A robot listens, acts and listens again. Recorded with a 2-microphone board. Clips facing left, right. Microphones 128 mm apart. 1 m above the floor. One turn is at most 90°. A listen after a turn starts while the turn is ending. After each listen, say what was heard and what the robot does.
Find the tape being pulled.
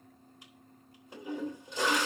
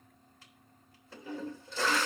Keep listening.
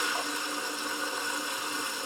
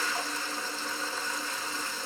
Keep listening.
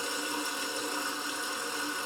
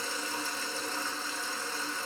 I can't make out tape being pulled to turn to.